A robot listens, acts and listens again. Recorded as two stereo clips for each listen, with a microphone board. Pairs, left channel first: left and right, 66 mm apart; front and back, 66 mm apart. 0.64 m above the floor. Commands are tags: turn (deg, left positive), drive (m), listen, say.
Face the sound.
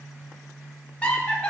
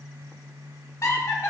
<turn deg="25"/>
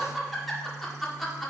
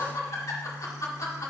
<say>Found it: laughter, straight ahead, 1 to 2 m away.</say>